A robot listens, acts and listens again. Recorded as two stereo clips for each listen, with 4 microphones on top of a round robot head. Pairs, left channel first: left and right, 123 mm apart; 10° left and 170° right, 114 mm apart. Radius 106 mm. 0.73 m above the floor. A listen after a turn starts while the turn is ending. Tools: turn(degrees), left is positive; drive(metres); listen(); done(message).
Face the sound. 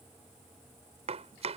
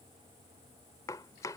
turn(degrees=-55)
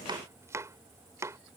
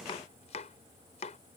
turn(degrees=-25)
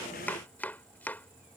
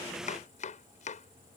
turn(degrees=15)
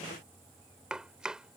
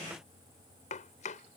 done("Facing the chopping.")